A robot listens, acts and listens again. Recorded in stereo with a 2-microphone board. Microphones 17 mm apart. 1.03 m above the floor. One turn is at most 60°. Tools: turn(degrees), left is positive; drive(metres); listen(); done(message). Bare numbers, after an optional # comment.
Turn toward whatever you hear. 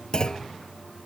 # The clunk: about 45° left or 135° left.
turn(45)
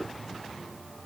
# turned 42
listen()
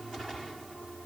done("I heard a clunk, but can't make it out now. It was about straight ahead or 95° left.")